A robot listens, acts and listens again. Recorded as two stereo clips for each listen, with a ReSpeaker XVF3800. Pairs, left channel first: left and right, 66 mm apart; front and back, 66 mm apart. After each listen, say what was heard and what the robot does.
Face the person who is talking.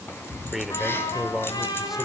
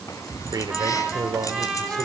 The man speaking: 175° right. Turn 175° right.
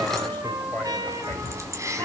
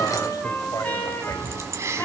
Keep listening.
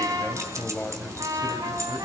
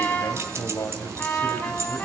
The man speaking is now 25° left. Turn 25° left.
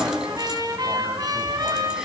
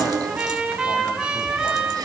Keep listening.
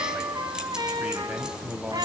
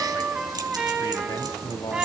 The man speaking is now 15° right. Turn 15° right.
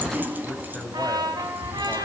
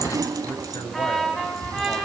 Found it: a man speaking, straight ahead.